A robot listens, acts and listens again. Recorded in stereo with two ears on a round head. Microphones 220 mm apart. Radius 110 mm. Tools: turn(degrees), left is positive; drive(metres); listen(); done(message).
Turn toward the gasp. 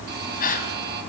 turn(degrees=35)
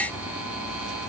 listen()
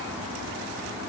done("I heard a gasp, but can't make it out now. It was about straight ahead or 110° left.")